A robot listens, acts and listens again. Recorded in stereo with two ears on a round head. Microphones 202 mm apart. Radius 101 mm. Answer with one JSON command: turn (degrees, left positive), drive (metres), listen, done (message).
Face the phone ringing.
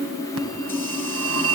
{"turn": -70}
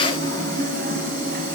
{"turn": -40}
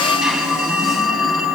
{"done": "Found it: a phone ringing, straight ahead, 2 to 4 m away."}